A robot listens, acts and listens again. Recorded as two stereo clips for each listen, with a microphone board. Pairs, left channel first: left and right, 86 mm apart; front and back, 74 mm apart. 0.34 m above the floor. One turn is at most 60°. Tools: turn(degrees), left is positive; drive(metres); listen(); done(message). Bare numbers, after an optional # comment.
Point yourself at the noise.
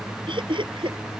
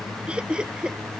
# The laughter: 100° right.
turn(-60)
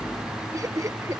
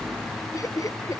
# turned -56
# The laughter is now 40° right.
turn(-40)
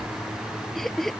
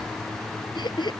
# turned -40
done("Facing the laughter.")